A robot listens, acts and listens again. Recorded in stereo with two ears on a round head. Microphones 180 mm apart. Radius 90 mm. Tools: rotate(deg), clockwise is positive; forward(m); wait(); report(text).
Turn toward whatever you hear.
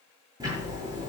rotate(20)
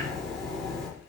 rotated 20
report("Facing the ticking, over 4 m away.")